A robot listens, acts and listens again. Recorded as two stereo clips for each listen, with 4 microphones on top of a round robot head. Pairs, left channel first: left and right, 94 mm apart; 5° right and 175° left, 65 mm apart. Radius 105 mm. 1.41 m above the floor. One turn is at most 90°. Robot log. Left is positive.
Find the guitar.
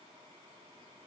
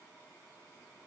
cmd idle
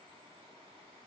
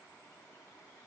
cmd idle
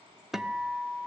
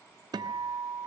note: The guitar: 175° right.
cmd yaw -90
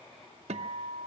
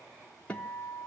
note: The guitar is now 80° right.
cmd yaw -80
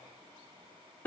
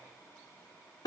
note: The guitar is now 15° left.
cmd yaw +15
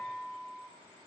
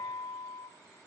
end: Facing the guitar.